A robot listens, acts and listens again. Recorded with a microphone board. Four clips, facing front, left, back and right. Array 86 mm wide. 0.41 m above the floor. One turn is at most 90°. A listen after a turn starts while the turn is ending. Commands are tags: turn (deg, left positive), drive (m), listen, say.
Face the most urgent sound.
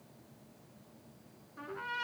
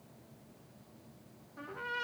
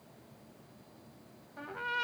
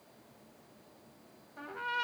<listen/>
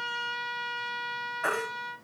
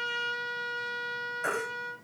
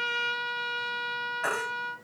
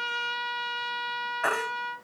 <turn deg="-90"/>
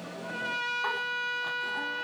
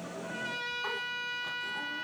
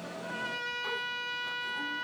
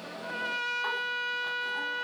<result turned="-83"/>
<turn deg="-20"/>
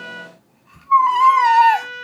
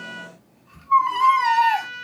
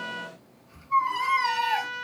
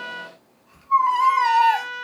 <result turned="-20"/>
<say>Facing the baby crying, 1 to 2 m away.</say>